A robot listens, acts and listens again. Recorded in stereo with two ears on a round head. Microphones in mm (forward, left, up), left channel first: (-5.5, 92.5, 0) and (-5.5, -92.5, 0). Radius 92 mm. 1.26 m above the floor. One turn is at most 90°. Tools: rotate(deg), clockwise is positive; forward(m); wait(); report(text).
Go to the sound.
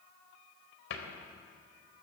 rotate(-65)
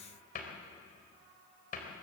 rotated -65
rotate(-45)
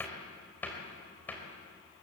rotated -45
rotate(-10)
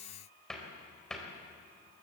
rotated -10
forward(1.0)
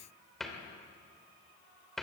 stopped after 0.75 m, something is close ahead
report("Something is in my way. I am facing the cupboard door but have not reached it.")